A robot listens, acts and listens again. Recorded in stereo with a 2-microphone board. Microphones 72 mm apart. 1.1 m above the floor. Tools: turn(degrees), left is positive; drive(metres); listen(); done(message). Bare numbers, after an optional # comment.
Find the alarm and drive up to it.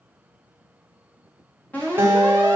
# The alarm: about 25° left or 155° left.
turn(25)
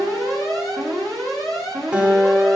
drive(1.0)
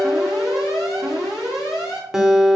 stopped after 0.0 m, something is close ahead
done("Blocked. The alarm is further on, straight ahead.")